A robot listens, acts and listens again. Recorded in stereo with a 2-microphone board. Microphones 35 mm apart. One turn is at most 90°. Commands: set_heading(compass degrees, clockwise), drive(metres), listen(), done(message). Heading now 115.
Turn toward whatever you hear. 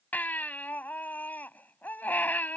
set_heading(65)
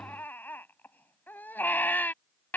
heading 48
set_heading(348)
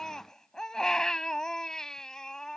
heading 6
set_heading(346)
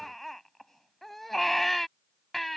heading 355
done("Found it: a baby crying, straight ahead.")